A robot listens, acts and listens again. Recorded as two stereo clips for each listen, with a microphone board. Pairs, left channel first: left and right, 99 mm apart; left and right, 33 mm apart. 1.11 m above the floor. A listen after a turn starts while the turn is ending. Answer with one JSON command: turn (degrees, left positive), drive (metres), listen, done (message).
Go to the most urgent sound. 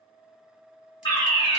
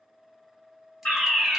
{"turn": 45}
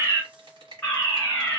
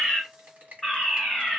{"turn": 15}
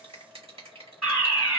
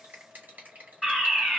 {"drive": 1.0}
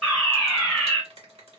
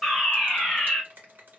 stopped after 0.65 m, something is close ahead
{"done": "Arrived at the fire alarm, straight ahead."}